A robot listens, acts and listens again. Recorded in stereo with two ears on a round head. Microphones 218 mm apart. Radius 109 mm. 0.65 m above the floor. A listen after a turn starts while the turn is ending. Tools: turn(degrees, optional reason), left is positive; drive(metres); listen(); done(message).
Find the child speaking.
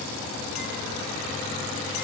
listen()
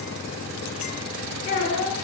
turn(degrees=35, reason="The child speaking: about 35° left or 145° left.")
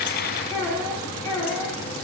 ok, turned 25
turn(degrees=10, reason="So it is at 10° left.")
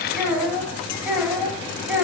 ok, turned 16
done("Found it: a child speaking, straight ahead, 2 to 4 m away.")